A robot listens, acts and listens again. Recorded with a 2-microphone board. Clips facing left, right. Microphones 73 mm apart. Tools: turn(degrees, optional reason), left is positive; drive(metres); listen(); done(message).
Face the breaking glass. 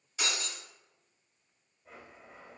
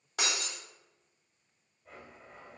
turn(degrees=-65, reason="The breaking glass: about 65° right or 115° right.")
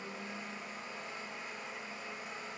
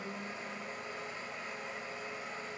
listen()
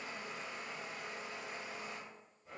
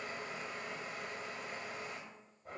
done("I heard breaking glass, but can't make it out now. It was about straight ahead or 50° right.")